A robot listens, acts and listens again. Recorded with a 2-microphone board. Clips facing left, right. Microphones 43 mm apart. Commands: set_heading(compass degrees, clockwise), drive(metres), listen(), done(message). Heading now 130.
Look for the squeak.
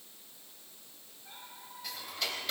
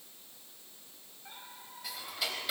set_heading(180)
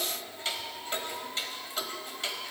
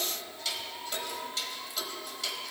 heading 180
done("Facing the squeak.")